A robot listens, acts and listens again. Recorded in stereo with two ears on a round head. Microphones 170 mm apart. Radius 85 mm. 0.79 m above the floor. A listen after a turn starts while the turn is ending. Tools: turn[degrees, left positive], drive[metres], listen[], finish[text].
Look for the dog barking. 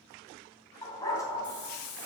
Thought: The dog barking: about 15° left or 165° left.
Action: turn[15]
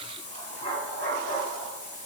Thought: The dog barking: about 25° left or 155° left.
Action: turn[25]
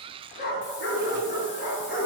Thought: So it is at 130° left.
Action: turn[130]
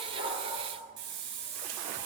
Action: listen[]
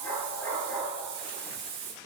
Thought: The dog barking is now 15° left.
Action: turn[15]
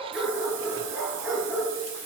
Action: finish[Facing the dog barking, over 4 m away.]